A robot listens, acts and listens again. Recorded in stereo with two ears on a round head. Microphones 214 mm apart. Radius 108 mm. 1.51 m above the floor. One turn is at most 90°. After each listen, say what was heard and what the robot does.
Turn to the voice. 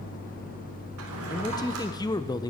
The man speaking: about 20° left or 160° left. Turn 20° left.
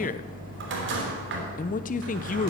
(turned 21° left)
So it is at 140° left. Turn 90° left.
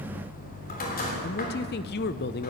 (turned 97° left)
The man speaking is now 45° left. Turn 45° left.
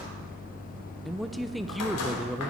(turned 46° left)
Facing the man speaking, under 1 m away.